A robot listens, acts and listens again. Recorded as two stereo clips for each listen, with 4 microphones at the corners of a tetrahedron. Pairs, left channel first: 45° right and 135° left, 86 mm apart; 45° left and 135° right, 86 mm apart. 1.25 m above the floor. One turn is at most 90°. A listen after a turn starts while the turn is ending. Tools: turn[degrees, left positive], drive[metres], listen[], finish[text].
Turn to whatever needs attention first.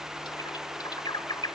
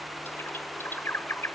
Action: listen[]
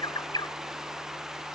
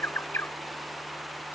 Action: listen[]
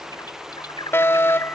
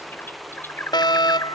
Thought: The fire alarm: 15° left.
Action: turn[15]
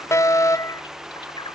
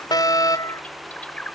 Action: finish[Facing the fire alarm.]